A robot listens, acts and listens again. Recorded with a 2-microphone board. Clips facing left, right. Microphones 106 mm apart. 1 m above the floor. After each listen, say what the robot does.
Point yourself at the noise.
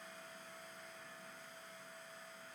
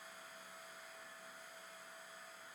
Keep listening.
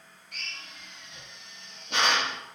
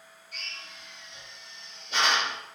Turn 65° left.
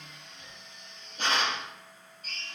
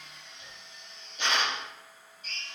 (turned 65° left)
Turn 45° left.
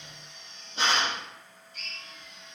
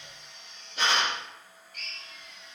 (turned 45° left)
Turn 30° left.
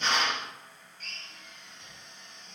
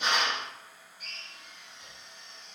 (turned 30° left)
Turn 15° right.
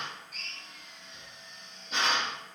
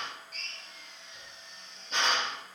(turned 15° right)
Facing the drill, 1 to 2 m away.